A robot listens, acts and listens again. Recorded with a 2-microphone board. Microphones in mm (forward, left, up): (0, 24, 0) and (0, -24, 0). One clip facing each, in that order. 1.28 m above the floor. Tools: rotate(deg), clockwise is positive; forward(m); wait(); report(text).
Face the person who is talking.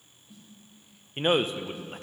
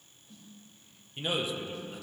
rotate(-45)
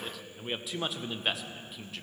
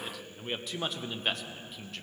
report("Facing the man speaking, under 1 m away.")